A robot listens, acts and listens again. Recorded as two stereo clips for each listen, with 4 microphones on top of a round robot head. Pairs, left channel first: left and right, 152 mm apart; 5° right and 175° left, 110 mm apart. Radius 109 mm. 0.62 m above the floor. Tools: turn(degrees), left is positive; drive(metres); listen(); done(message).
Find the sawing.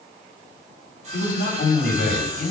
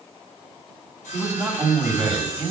turn(degrees=-35)
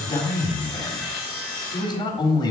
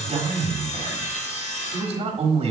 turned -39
done("Facing the sawing.")